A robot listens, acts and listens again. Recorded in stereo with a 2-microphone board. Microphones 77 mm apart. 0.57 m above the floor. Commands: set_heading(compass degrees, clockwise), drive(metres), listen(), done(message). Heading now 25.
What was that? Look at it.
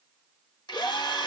set_heading(295)
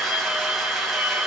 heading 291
done("Facing the drill.")